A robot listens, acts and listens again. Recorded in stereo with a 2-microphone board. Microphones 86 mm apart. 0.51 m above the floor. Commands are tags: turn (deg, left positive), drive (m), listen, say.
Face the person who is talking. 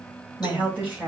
<turn deg="-15"/>
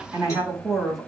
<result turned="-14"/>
<turn deg="30"/>
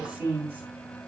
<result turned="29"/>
<turn deg="-25"/>
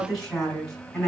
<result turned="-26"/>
<say>Found it: a woman speaking, straight ahead.</say>